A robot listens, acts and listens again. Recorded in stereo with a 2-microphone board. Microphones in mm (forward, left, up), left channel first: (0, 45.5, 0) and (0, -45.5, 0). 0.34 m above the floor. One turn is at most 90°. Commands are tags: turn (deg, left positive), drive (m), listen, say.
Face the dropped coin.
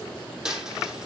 <turn deg="-30"/>
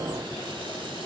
<listen/>
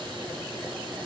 <say>I heard a dropped coin, but can't make it out now. It was about 25° left or 145° right.</say>